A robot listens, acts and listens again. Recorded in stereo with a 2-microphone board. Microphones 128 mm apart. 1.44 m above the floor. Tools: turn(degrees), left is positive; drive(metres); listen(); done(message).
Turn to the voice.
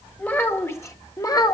turn(degrees=30)
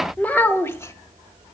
turn(degrees=20)
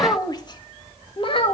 turn(degrees=45)
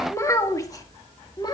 turn(degrees=35)
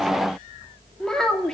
done("Facing the child speaking.")